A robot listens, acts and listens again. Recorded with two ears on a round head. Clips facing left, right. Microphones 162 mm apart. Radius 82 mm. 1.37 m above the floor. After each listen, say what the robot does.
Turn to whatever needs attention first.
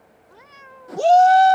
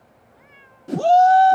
Turn 20° left.
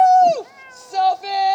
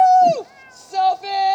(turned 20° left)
Facing the shout.